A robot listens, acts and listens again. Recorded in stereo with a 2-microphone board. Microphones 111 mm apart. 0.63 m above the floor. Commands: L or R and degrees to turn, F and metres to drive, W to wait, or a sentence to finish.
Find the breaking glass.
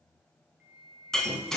L30
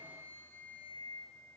W
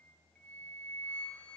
I heard breaking glass, but can't make it out now. It was about 25° right or 145° left.